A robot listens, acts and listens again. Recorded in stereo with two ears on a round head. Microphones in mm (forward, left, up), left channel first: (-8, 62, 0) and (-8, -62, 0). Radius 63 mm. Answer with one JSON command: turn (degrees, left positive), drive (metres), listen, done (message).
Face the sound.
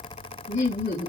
{"turn": 60}
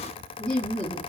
{"turn": 10}
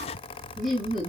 {"done": "Facing the laughter, 1 to 2 m away."}